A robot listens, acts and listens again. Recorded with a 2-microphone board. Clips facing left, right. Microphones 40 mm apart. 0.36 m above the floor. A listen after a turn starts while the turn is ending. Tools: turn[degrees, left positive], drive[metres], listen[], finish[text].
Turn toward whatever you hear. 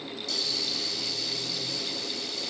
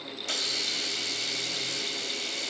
Thought: The hiss: about 55° right or 125° right.
Action: turn[-55]
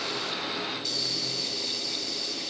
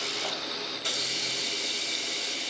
Thought: So it is at 65° right.
Action: turn[-65]
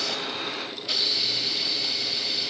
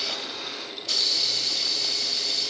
Thought: The hiss is now 20° left.
Action: turn[20]
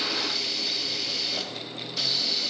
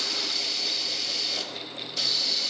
Action: finish[Found it: a hiss, straight ahead.]